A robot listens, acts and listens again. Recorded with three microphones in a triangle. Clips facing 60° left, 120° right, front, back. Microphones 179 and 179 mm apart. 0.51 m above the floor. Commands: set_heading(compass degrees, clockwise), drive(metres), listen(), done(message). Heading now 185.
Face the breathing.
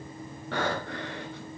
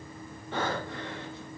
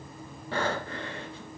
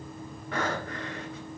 set_heading(125)
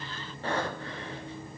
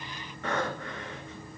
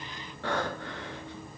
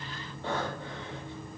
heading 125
done("Facing the breathing, 1 to 2 m away.")